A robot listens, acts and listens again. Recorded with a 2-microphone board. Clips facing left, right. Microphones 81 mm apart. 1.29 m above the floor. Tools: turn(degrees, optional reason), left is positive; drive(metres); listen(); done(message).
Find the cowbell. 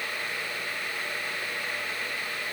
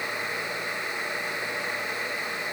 listen()
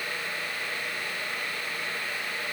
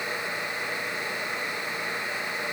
listen()
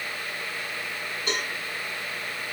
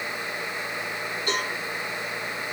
turn(degrees=25, reason="The cowbell: about 25° left or 155° left.")
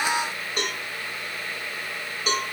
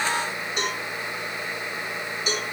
turn(degrees=130, reason="So it is at 130° left.")
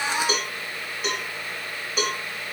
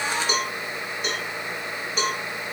done("Found it: a cowbell, straight ahead.")